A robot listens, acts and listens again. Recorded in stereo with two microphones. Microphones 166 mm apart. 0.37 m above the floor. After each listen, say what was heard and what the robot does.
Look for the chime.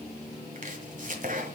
Keep listening.
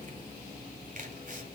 Keep listening.
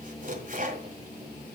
I can't make out a chime to turn to.